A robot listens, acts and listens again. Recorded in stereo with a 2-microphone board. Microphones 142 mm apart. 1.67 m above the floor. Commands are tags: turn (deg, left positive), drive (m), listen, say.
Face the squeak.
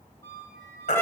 <turn deg="20"/>
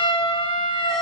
<listen/>
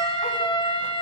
<listen/>
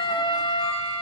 <say>I heard a squeak, but can't make it out now. It was about straight ahead or 140° left.</say>